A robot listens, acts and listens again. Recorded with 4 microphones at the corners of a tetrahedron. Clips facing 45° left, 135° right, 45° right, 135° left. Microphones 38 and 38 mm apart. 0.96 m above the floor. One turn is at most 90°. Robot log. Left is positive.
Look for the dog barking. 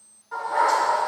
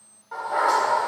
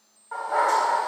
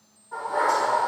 note: The dog barking: 70° right.
cmd yaw -70
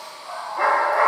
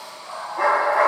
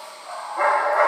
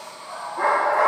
note: The dog barking is now 45° right.
cmd yaw -45
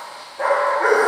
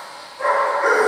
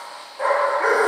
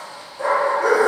note: The dog barking is now 10° left.
cmd yaw +10
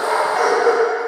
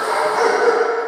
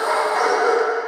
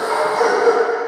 note: The dog barking is now 10° right.
cmd yaw -10
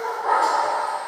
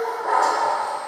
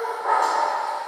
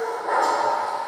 note: The dog barking is now 10° right.
cmd yaw -10
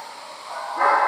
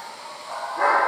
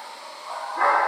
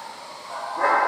end: Facing the dog barking.